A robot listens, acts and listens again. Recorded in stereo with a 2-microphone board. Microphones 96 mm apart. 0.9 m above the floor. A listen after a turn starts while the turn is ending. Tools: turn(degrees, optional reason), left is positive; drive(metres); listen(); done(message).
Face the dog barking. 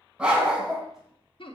turn(degrees=-30)
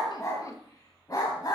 turn(degrees=45, reason="So it is at 45° left.")
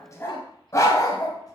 turn(degrees=40, reason="The dog barking is now 40° left.")
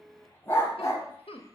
turn(degrees=30, reason="The dog barking is now 30° left.")
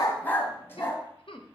turn(degrees=25, reason="The dog barking is now 25° left.")
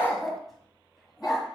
done("Facing the dog barking.")